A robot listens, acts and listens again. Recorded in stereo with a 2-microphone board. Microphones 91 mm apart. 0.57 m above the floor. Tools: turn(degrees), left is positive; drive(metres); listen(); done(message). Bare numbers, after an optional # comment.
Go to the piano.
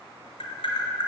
listen()
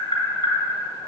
listen()
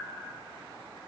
done("I can't make out a piano to turn to.")